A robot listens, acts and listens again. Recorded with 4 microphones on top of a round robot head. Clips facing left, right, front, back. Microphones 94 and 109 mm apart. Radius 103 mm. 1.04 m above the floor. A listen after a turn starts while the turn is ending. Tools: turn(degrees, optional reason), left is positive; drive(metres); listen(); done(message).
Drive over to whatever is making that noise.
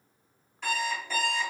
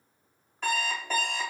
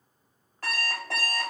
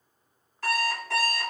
turn(degrees=-50, reason="The alarm clock: 50° right.")
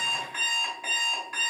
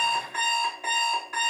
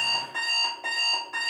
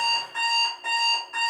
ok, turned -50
turn(degrees=-25, reason="The alarm clock is now 25° right.")
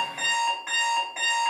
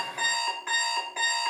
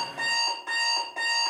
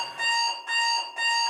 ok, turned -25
turn(degrees=-10, reason="The alarm clock is now 10° right.")
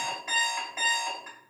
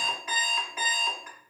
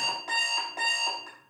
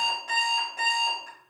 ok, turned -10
drive(metres=1.0)
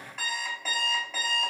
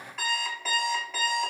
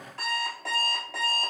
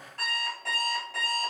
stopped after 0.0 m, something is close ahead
done("Blocked. The alarm clock is further on, straight ahead.")